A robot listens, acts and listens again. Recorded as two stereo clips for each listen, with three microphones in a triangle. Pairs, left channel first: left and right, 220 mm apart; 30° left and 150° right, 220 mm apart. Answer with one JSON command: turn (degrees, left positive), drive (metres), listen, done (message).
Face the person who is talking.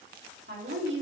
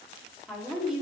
{"turn": -60}
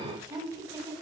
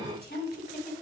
{"turn": -20}
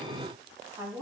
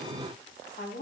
{"turn": -15}
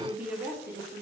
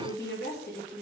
{"turn": -15}
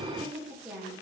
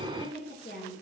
{"turn": -10}
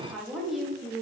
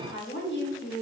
{"done": "Facing the woman speaking, 1 to 2 m away."}